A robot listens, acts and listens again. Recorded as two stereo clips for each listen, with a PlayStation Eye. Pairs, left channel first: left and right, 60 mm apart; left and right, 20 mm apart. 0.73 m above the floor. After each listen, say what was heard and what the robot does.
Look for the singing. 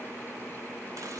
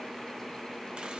Keep listening.
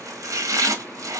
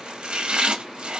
Keep listening.
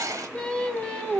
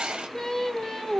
Turn 30° left.
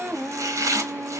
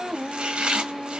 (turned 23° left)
So it is at 30° right. Turn 30° right.
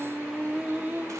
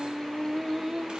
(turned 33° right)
The singing is now 30° right. Turn 30° right.
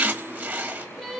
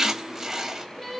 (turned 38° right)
Found it: singing, straight ahead, 1 to 2 m away.